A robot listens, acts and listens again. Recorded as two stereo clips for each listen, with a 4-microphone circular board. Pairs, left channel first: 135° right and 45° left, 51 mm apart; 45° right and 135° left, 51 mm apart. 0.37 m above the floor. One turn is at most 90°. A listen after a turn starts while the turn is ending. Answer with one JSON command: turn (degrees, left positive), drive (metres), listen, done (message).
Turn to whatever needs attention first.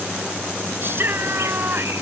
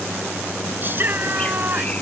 {"turn": 85}
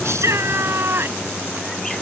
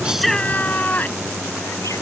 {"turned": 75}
{"turn": 10}
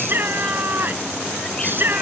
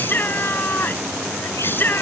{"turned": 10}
{"done": "Found it: a shout, straight ahead."}